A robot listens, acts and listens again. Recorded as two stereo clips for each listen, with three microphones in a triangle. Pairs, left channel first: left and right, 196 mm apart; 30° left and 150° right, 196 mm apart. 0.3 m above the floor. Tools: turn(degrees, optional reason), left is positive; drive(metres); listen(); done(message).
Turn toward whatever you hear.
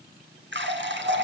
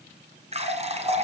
turn(degrees=-95, reason="The running tap: 95° right.")
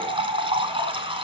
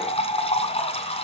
turn(degrees=-30, reason="The running tap is now 30° right.")
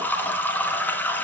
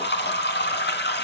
turn(degrees=10, reason="The running tap is now 10° left.")
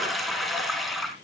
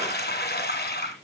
done("Found it: a running tap, straight ahead.")